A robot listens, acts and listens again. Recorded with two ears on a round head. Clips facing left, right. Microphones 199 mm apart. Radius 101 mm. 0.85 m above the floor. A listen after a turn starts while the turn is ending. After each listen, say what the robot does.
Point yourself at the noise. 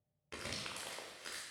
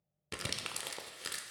Turn 50° right.
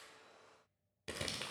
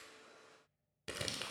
Facing the crumpling, under 1 m away.